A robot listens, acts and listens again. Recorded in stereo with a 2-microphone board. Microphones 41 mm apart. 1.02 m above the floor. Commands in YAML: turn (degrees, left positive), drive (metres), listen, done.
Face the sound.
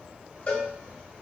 turn: 35
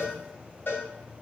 turn: 100
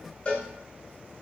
turn: 35
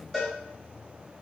done: "Found it: a cowbell, straight ahead, 1 to 2 m away."